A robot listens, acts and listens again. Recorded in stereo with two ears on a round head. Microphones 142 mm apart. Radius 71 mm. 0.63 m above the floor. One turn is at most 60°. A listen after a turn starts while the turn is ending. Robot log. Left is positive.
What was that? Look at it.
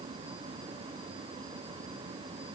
cmd idle
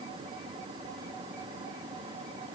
cmd idle
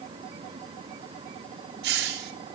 cmd yaw -60
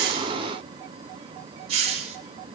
note: So it is at 40° right.
cmd yaw -40
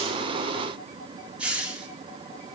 note: The hiss is now 10° right.
cmd yaw -10
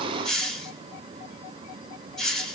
end: Facing the hiss.